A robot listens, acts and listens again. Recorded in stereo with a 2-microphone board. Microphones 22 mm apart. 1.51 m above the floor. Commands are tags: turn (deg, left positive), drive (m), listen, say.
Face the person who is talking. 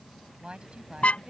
<turn deg="-50"/>
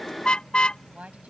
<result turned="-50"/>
<turn deg="-80"/>
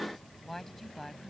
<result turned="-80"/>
<turn deg="10"/>
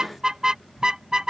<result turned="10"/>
<listen/>
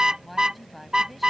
<say>Found it: a woman speaking, straight ahead.</say>